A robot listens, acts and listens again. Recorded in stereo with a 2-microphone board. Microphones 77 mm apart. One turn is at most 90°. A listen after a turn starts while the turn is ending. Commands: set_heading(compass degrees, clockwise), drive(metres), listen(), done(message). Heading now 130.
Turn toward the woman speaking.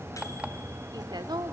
set_heading(195)
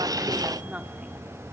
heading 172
set_heading(192)
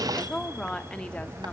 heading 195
set_heading(185)
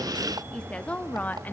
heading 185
set_heading(165)
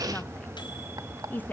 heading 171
set_heading(146)
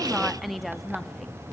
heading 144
done("Facing the woman speaking.")